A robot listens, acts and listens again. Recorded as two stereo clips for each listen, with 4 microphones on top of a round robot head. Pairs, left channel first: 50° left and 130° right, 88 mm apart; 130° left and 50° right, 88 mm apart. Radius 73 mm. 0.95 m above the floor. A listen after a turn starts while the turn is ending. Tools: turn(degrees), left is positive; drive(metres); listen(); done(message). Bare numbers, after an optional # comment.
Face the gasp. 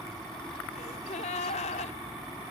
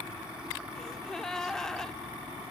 # The gasp: 50° left.
turn(50)
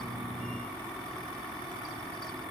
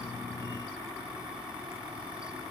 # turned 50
done("I heard a gasp from this way, but can't make it out now.")